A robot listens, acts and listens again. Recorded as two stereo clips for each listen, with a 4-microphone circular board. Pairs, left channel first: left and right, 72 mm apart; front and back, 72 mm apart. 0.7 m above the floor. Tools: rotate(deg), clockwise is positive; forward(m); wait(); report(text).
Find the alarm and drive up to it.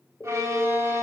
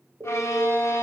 rotate(-140)
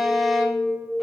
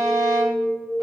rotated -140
forward(1.0)
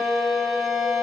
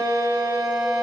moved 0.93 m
wait()
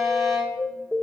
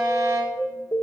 forward(1.0)
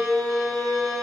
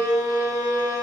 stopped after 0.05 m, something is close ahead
report("Arrived at the alarm, straight ahead.")